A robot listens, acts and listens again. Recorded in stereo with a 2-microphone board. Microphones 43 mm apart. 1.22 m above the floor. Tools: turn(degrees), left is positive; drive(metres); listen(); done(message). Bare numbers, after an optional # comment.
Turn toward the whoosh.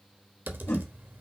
# The whoosh: about 75° left or 105° left.
turn(75)
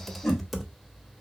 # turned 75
done("Found it: a whoosh, straight ahead.")